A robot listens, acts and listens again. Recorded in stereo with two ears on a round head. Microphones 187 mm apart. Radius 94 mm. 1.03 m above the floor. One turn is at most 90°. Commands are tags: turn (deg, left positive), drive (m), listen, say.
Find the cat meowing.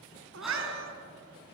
<turn deg="-65"/>
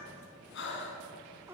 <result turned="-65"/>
<turn deg="-10"/>
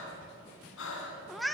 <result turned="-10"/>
<say>Facing the cat meowing, under 1 m away.</say>